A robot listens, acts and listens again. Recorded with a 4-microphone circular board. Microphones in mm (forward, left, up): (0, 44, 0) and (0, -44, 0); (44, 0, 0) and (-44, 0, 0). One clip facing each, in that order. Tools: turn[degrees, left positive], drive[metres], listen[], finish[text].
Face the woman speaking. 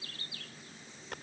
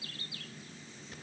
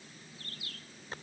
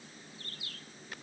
Action: listen[]
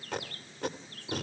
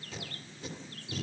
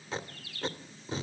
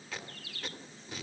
Action: listen[]
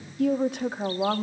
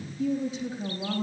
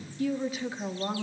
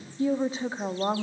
Thought: The woman speaking: 130° left.
Action: turn[130]
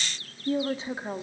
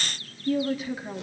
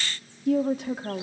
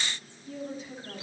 Thought: The woman speaking is now 30° left.
Action: turn[30]
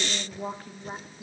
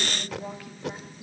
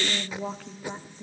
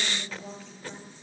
Thought: The woman speaking is now 35° left.
Action: turn[35]
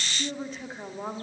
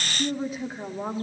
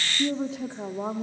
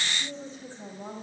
Action: finish[Facing the woman speaking.]